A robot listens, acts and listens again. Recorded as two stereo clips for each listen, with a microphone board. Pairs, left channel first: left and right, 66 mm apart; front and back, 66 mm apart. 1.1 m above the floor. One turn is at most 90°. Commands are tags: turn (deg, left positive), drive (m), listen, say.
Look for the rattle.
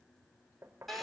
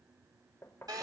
<listen/>
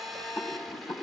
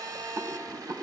<turn deg="90"/>
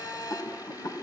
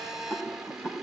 <turn deg="65"/>
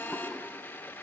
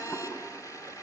<turn deg="-10"/>
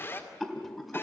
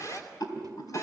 <say>Facing the rattle.</say>